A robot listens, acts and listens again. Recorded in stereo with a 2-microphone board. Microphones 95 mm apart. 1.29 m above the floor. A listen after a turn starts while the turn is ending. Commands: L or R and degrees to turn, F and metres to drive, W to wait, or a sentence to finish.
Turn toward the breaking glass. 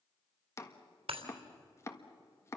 R90
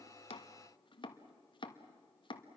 I heard breaking glass from this way, but can't make it out now.